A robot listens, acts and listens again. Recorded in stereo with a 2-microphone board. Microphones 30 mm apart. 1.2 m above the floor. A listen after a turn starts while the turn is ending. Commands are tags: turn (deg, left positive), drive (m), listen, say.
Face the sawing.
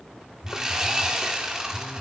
<turn deg="-20"/>
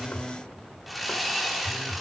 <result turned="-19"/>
<say>Facing the sawing.</say>